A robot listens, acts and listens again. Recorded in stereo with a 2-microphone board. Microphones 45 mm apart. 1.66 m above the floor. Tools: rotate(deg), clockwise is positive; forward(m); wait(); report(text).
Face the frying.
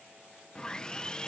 wait()
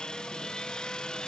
wait()
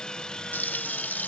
rotate(-50)
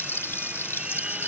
rotate(-80)
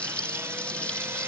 rotate(-30)
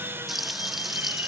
report("Facing the frying.")